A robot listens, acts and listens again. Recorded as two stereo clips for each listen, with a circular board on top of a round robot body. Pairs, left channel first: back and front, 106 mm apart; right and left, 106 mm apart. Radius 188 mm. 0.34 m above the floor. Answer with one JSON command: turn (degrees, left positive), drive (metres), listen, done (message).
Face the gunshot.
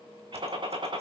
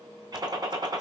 {"turn": 40}
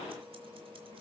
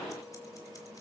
{"done": "I heard a gunshot from this way, but can't make it out now."}